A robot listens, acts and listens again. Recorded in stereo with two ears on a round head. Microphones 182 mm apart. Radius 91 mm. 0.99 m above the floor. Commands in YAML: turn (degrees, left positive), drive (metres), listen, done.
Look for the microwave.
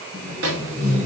turn: -75
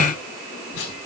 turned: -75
listen: true
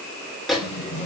done: "Facing the microwave."